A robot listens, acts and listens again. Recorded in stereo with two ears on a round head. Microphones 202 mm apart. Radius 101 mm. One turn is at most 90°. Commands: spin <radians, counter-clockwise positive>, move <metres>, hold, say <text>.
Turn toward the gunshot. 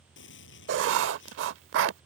spin 0.96
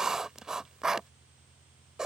hold
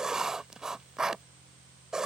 say I heard a gunshot, but can't make it out now. It was about straight ahead or 70° left.